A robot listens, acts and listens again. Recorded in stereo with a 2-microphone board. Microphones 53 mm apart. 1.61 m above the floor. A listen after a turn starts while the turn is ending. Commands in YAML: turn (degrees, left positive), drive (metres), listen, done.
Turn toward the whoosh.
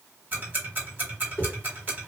turn: 40
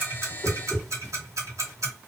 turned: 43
done: "Found it: a whoosh, straight ahead, 1 to 2 m away."